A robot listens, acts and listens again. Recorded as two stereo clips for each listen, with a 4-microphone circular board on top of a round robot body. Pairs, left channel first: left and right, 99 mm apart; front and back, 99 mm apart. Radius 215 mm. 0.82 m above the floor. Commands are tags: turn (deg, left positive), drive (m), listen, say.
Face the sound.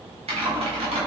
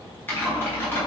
<turn deg="-70"/>
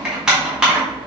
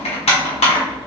<turn deg="-10"/>
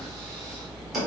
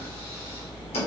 <say>Facing the typing on a keyboard.</say>